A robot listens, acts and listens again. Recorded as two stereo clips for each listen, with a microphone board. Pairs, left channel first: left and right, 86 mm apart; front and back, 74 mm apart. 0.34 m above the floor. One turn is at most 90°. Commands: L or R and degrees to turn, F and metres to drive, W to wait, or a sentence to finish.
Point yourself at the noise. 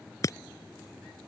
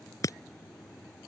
L40
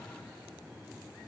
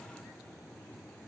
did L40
Facing where the breaking glass came from. I can't hear it now.